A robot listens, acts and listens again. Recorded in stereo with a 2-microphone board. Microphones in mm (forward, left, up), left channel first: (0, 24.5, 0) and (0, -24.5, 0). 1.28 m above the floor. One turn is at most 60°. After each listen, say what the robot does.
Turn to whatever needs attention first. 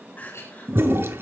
Turn 35° left.
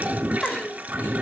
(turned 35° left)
Facing the crying, 2 to 4 m away.